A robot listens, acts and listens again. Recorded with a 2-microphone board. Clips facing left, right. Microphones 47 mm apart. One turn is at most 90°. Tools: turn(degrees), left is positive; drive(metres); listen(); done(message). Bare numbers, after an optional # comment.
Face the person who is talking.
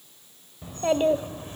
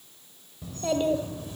# The child speaking: about 40° left or 140° left.
turn(40)
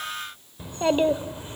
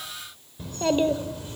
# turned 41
# So it is at 30° left.
turn(30)
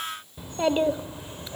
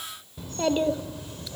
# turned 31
# The child speaking is now 30° left.
turn(30)
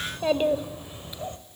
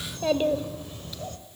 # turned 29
# The child speaking is now 25° left.
turn(25)
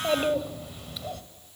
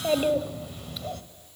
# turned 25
done("Found it: a child speaking, straight ahead.")